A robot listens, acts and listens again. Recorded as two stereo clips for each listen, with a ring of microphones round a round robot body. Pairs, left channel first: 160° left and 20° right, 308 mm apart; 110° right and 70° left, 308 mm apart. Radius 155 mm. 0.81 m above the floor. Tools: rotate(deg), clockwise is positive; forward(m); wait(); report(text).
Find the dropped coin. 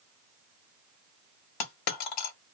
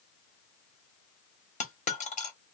rotate(-180)
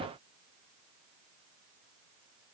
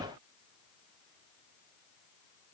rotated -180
report("I heard a dropped coin from this way, but can't make it out now.")